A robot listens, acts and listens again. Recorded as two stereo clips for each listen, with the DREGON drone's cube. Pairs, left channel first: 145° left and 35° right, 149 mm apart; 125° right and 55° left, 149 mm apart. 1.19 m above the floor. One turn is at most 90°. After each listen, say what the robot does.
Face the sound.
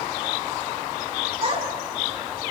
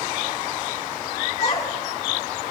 Turn 70° right.
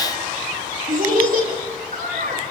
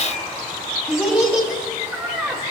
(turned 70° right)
Turn 20° right.
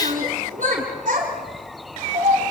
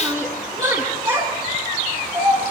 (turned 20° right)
Found it: a child speaking, straight ahead, over 4 m away.